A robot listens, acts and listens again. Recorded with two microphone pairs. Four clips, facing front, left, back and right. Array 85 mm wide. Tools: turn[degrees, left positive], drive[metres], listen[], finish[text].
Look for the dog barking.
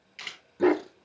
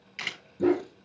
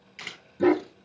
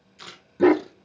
Thought: The dog barking: 75° right.
Action: turn[-75]
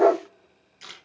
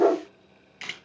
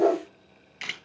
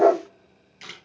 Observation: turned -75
Thought: The dog barking is now 10° left.
Action: turn[10]
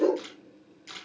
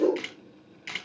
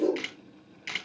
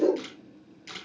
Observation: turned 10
Thought: The dog barking is now 20° left.
Action: turn[20]
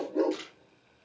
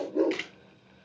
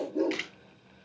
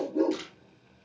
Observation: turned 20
Thought: The dog barking is now 25° left.
Action: turn[25]
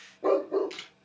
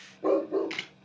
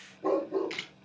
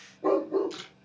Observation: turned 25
Thought: The dog barking is now 15° left.
Action: turn[15]
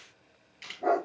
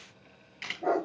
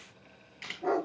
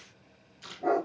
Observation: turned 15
Thought: The dog barking is now 10° left.
Action: turn[10]
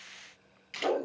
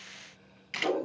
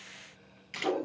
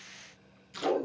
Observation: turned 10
Action: finish[Found it: a dog barking, straight ahead, 2 to 4 m away.]